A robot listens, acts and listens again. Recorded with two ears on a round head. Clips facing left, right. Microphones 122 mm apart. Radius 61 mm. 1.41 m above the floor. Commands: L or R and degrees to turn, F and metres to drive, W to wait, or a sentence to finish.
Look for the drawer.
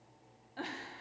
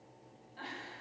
W
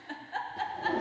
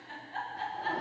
L35
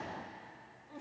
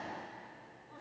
W
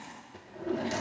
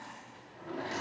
L105
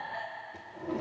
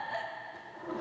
L25
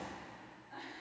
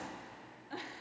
W
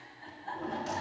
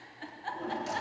Facing the drawer, 1 to 2 m away.